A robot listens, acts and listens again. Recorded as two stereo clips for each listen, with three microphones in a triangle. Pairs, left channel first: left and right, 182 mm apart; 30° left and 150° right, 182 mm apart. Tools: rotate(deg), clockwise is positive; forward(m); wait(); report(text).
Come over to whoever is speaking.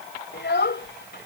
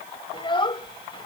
rotate(-90)
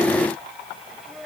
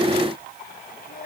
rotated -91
forward(1.0)
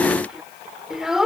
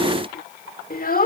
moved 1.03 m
forward(1.0)
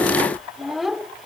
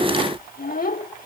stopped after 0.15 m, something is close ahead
report("Arrived at the child speaking, straight ahead.")